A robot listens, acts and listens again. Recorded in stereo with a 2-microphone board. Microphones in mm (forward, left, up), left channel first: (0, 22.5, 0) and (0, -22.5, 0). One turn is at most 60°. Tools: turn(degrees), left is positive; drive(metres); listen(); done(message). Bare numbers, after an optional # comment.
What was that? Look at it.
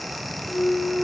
# The clunk: about 40° left or 140° left.
turn(40)
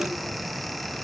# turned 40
listen()
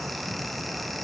done("I heard a clunk, but can't make it out now. It was about straight ahead or 100° left.")